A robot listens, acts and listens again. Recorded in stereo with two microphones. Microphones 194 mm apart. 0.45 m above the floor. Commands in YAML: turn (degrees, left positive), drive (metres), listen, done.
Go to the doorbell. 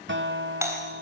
turn: -30
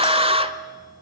listen: true
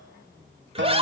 listen: true
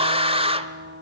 done: "I heard a doorbell, but can't make it out now. It was about 15° left or 135° right. I did not reach it."